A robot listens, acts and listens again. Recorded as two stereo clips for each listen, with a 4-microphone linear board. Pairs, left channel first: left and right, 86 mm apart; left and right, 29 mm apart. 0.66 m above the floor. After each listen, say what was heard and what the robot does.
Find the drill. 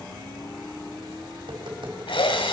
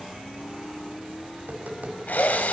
Turn 90° left.
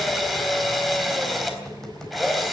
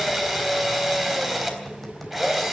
Facing the drill, 2 to 4 m away.